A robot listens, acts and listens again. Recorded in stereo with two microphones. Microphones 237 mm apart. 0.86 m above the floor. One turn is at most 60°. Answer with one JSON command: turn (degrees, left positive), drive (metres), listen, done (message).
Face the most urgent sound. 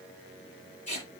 {"listen": true}
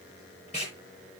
{"listen": true}
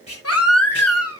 {"turn": 60}
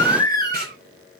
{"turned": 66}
{"turn": 15}
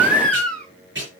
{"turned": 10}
{"done": "Found it: a baby crying, straight ahead, 2 to 4 m away."}